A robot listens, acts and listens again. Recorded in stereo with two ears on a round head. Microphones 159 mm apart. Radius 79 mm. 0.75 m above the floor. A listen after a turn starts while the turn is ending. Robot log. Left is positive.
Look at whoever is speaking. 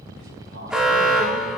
cmd idle
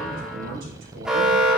note: The man speaking: about 70° right or 110° right.
cmd yaw -70
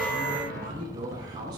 note: So it is at 25° right.
cmd yaw -25
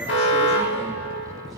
cmd idle
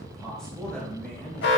end: Found it: a man speaking, straight ahead.